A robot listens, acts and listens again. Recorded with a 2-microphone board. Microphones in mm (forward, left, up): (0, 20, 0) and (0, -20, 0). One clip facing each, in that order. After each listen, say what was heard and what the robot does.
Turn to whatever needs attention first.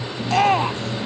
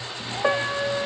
Turn 90° left.
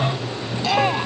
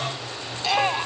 Found it: a shout, straight ahead.